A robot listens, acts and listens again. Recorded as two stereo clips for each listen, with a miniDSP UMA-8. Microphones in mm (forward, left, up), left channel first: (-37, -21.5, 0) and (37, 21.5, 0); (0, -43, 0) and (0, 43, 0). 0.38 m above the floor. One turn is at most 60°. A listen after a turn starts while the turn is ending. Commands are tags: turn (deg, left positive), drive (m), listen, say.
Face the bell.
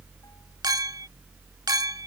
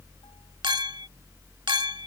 <listen/>
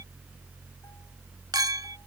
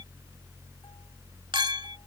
<listen/>
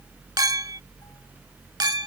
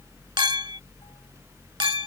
<say>I can't make out a bell, only a clink.</say>